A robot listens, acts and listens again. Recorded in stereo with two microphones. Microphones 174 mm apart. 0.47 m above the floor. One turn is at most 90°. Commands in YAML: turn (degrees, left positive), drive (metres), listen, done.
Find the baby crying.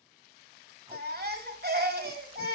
turn: -65
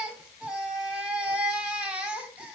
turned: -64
done: "Facing the baby crying."